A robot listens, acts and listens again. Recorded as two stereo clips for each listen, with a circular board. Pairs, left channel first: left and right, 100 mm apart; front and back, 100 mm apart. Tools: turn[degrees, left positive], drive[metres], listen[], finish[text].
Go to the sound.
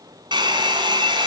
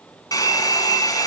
Thought: The hair dryer: 50° right.
Action: turn[-50]
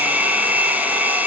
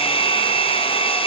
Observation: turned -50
Thought: The hair dryer is now 15° right.
Action: turn[-15]
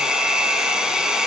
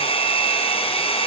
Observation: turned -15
Action: drive[1.0]
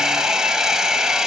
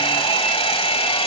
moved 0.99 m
Action: drive[1.0]
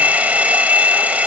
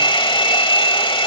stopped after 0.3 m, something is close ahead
Thought: The hair dryer is now 15° right.
Action: turn[-15]
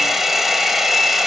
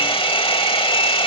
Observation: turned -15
Action: finish[I am next to the hair dryer.]